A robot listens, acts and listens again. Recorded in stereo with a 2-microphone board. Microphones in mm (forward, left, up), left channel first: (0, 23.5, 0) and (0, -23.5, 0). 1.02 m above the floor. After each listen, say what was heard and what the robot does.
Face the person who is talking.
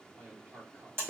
The man speaking: about 60° right or 120° right. Turn 60° right.
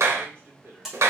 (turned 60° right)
So it is at 60° right. Turn 60° right.
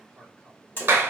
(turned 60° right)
The man speaking is now 10° right. Turn 10° right.
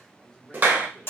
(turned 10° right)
Keep listening.
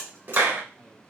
Keep listening.
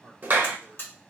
Found it: a man speaking, straight ahead, 2 to 4 m away.